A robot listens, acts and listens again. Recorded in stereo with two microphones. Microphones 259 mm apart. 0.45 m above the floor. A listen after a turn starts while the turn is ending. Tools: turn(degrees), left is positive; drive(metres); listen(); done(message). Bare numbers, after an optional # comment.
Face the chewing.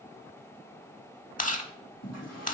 # The chewing: about 30° left or 150° left.
turn(30)
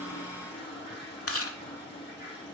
# So it is at 120° left.
turn(120)
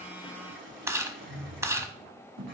# The chewing is now 10° right.
turn(-10)
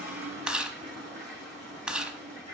done("Facing the chewing, under 1 m away.")